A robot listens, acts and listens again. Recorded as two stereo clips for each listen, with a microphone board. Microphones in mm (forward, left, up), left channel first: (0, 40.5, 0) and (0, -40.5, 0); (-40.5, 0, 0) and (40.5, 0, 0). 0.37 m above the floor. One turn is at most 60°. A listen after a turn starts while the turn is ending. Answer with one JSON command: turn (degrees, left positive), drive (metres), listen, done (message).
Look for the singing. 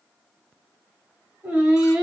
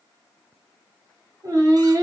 {"turn": -15}
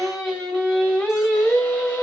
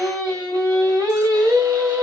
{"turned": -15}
{"turn": 35}
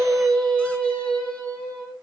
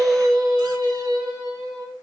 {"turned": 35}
{"turn": 20}
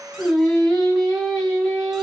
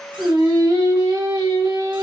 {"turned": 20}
{"done": "Found it: singing, straight ahead, 2 to 4 m away."}